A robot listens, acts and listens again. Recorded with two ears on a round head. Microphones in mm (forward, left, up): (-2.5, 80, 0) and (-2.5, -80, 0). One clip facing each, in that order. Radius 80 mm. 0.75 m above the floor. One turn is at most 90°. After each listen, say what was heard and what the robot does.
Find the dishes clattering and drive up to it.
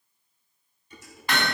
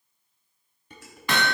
The dishes clattering: about 50° right or 130° right. Turn 50° right.
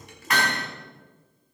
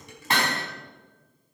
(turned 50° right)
So it is at 80° right. Turn 80° right.
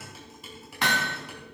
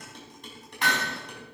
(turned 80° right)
Drive 1.0 m forward.
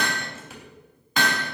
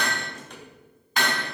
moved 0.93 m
Drive 1.0 m forward.
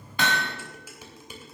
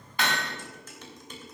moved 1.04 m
The dishes clattering is now 10° left. Turn 10° left.
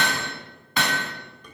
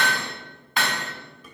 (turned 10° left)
Drive 1.0 m forward.
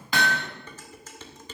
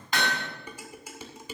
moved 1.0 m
The dishes clattering is now 10° right. Turn 10° right.
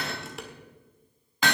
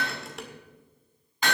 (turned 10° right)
Drive 1.0 m forward.
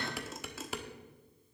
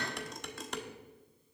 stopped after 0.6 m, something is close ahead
I am next to the dishes clattering.